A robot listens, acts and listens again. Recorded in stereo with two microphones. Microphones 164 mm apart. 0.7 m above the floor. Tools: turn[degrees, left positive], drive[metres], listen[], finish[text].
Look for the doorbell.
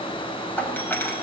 Action: turn[30]
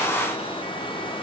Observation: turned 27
Action: listen[]
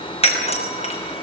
Thought: So it is at 140° left.
Action: turn[140]
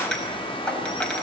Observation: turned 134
Action: finish[Found it: a doorbell, straight ahead.]